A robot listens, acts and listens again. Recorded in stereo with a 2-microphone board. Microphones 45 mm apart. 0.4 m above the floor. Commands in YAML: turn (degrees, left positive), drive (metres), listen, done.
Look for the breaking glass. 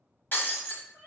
turn: 45
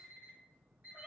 listen: true
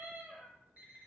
done: "I heard breaking glass, but can't make it out now. It was about straight ahead or 90° left."